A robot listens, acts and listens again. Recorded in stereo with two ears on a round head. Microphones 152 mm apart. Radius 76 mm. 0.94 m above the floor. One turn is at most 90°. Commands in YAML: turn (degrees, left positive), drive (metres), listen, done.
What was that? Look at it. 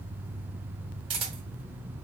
turn: -30
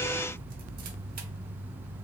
listen: true
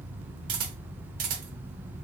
turn: -90
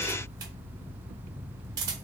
turn: -25
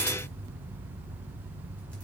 listen: true
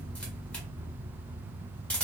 done: "Facing the camera shutter, 1 to 2 m away."